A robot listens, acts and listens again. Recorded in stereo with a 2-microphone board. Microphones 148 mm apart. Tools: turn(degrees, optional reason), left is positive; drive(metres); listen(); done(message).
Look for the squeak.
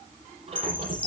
turn(degrees=-45, reason="The squeak: about 45° right or 135° right.")
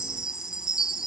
listen()
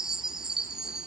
listen()
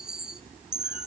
done("I heard a squeak, but can't make it out now. It was about straight ahead or 90° right.")